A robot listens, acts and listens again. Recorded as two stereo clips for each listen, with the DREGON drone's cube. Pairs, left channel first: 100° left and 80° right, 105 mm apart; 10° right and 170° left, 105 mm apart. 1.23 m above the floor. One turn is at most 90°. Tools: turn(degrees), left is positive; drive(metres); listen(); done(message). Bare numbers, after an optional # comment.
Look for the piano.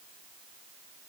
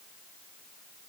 listen()
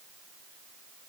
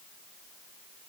listen()
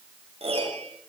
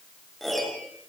# The piano: 100° right.
turn(-90)
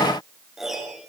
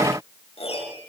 done("Facing the piano, over 4 m away.")